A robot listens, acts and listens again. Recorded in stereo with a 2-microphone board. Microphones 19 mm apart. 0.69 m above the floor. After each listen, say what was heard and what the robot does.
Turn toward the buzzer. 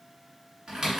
Keep listening.
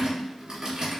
Keep listening.
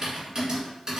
I can't make out a buzzer, only typing on a keyboard.